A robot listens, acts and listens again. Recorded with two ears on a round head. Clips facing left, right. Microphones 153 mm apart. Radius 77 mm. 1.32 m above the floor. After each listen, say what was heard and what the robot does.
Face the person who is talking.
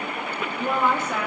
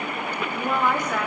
Turn 30° left.
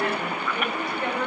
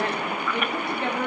So it is at 25° right. Turn 25° right.
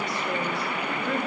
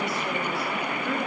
Keep listening.
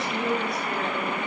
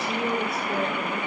Facing the woman speaking, 2 to 4 m away.